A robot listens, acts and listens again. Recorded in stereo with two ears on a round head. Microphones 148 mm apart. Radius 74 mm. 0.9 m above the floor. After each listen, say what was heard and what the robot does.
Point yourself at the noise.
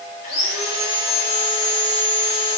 The sawing: about 45° left or 135° left. Turn 45° left.
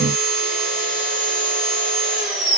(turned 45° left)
Found it: sawing, straight ahead, 2 to 4 m away.